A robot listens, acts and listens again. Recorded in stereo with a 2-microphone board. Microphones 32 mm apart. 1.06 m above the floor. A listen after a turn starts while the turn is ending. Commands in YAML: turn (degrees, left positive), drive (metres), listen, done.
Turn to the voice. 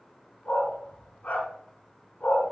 listen: true
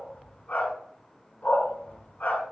listen: true
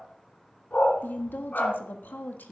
turn: 90
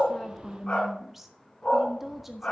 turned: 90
turn: -10
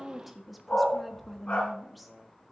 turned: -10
done: "Facing the woman speaking."